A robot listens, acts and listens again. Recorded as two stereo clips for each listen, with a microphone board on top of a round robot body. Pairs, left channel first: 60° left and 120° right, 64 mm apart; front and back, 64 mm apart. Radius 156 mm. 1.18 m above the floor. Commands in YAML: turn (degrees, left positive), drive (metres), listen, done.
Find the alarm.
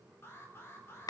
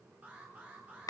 turn: 110
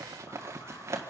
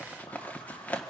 listen: true
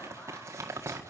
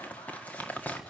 listen: true
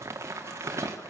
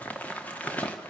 done: "Facing where the alarm came from. I can't hear it now."